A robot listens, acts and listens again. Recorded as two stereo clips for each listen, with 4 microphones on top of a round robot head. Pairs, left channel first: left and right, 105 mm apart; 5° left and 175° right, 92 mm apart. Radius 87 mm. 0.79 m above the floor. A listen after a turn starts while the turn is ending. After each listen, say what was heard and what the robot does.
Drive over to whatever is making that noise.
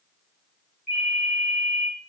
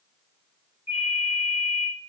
Drive 1.0 m forward.
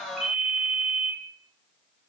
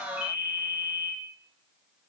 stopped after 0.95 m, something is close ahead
I am next to the ringtone.